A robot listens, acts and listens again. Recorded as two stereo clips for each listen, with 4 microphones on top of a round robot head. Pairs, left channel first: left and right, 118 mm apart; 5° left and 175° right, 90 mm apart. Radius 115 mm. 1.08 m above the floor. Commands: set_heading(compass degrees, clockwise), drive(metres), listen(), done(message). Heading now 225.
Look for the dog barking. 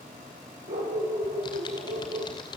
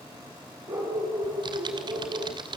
set_heading(350)
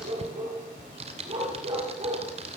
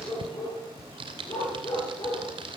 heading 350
set_heading(45)
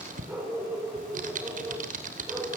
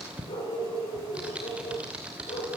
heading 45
set_heading(65)
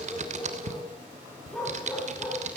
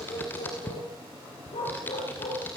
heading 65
done("Facing the dog barking.")